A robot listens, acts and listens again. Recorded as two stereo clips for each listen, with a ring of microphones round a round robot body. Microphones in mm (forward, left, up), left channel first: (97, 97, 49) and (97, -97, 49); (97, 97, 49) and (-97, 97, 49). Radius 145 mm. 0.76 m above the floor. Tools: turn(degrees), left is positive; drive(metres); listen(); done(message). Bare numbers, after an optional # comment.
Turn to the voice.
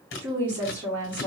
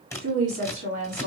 # The woman speaking: 175° right.
turn(-175)
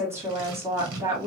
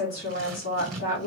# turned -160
# The woman speaking is now 15° right.
turn(-15)
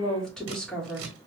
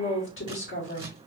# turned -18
done("Facing the woman speaking, 2 to 4 m away.")